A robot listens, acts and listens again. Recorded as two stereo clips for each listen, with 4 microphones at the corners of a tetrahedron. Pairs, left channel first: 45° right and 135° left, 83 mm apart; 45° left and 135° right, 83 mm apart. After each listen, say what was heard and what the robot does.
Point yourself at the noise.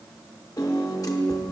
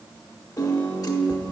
Facing the piano.